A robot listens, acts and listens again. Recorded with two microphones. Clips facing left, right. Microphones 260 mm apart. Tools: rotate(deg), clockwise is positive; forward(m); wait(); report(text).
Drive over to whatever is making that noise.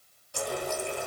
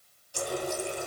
rotate(-65)
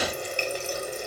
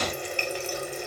rotate(-45)
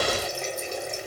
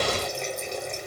forward(1.0)
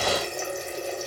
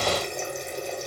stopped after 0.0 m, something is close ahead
report("Blocked. The running tap is further on, straight ahead.")